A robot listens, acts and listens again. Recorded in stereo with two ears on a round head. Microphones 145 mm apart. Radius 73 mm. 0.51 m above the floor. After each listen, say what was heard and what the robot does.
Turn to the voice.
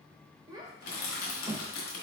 The child speaking: about 25° right or 155° right. Turn 25° right.
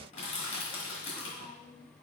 Found it: a child speaking, straight ahead.